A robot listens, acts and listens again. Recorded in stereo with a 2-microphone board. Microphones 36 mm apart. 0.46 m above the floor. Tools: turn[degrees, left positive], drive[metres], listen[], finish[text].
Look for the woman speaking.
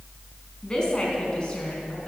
Thought: The woman speaking: about 25° left or 155° left.
Action: turn[25]
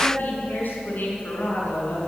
Thought: So it is at 120° left.
Action: turn[120]
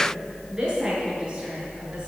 Thought: The woman speaking is now 20° right.
Action: turn[-20]
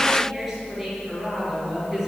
Action: finish[Found it: a woman speaking, straight ahead, over 4 m away.]